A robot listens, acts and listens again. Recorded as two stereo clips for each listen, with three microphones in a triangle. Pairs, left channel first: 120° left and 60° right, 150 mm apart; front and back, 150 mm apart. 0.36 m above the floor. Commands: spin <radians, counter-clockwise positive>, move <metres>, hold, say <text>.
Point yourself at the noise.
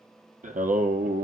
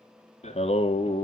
spin -0.87
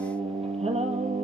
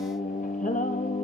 spin -0.44
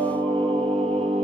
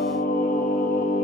spin -0.26
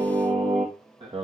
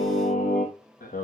spin -0.17
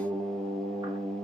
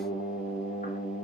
say Found it: singing, straight ahead, 2 to 4 m away.